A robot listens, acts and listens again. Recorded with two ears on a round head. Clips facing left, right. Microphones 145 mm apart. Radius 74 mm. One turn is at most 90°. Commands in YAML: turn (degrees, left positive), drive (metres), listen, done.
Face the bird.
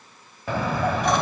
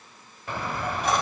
turn: 65
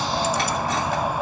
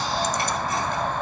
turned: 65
turn: 10
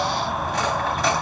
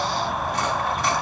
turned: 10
done: "Found it: a bird, straight ahead."